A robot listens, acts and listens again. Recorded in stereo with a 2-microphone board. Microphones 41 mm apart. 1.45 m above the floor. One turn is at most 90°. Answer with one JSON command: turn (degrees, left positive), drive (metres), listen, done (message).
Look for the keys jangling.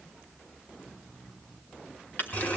{"turn": 55}
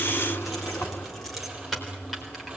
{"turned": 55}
{"done": "Found it: keys jangling, straight ahead."}